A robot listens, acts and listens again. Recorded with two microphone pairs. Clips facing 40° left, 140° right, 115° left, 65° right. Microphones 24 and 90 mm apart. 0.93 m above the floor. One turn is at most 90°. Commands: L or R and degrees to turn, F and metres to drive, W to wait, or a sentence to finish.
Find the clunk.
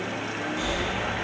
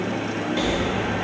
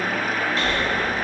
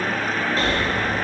W
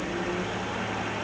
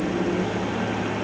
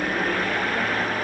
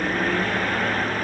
W
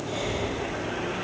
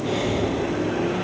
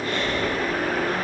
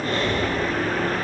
I can't make out a clunk to turn to.